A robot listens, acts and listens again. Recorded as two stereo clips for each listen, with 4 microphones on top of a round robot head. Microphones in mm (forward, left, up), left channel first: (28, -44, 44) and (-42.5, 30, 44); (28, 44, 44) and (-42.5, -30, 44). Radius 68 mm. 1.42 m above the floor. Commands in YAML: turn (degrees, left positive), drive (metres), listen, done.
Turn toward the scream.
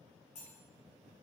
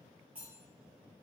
listen: true
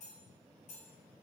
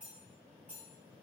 listen: true
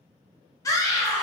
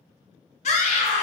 turn: 15
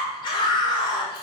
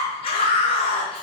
done: "Found it: a scream, straight ahead."